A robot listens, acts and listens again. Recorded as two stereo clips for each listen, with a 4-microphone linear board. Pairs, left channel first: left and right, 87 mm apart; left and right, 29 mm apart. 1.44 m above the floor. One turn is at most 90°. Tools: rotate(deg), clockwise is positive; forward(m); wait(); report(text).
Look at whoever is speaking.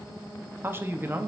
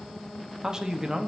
rotate(25)
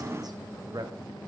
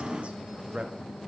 rotate(90)
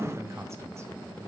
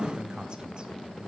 rotate(35)
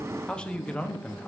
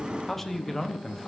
rotate(-10)
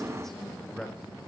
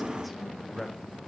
report("Facing the man speaking.")